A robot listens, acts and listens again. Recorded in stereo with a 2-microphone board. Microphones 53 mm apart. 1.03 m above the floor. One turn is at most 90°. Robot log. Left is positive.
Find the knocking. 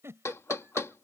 note: The knocking: about 65° left or 115° left.
cmd yaw +65
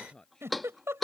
end: Facing the knocking.